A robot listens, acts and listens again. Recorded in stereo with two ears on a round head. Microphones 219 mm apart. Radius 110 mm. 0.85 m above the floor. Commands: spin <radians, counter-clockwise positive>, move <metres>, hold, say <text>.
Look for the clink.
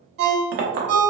spin -0.79
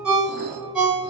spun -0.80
hold
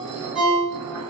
hold
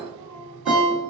say I heard a clink, but can't make it out now. It was about straight ahead or 90° right.